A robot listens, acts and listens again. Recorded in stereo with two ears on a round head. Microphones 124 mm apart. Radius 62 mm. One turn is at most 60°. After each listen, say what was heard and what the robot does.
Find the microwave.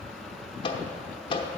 The microwave: about 35° left or 145° left. Turn 35° left.
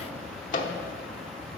So it is at 105° left. Turn 60° left.
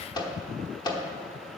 The microwave is now 30° left. Turn 30° left.
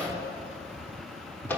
The microwave is now 15° left. Turn 15° left.
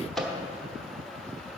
Facing the microwave, under 1 m away.